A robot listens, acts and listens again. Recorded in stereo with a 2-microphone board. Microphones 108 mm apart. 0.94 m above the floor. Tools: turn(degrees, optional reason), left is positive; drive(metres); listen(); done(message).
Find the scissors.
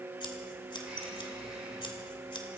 turn(degrees=50, reason="The scissors: about 50° left or 130° left.")
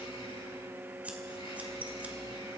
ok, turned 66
turn(degrees=-15, reason="So it is at 15° right.")
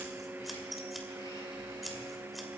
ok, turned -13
done("Facing the scissors, 2 to 4 m away.")